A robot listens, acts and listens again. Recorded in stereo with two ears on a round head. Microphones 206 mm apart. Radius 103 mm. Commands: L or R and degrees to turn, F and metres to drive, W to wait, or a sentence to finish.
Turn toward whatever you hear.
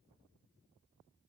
W
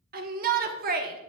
R40
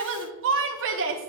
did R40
R90
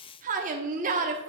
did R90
R45
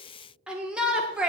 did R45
Found it: a shout, straight ahead, 1 to 2 m away.